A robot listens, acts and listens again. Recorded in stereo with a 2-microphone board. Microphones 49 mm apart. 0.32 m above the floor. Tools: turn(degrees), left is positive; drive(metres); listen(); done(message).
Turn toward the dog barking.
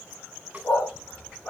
turn(degrees=40)
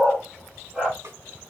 turn(degrees=-20)
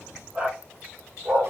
turn(degrees=-35)
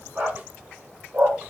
turn(degrees=-35)
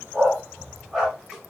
done("Facing the dog barking.")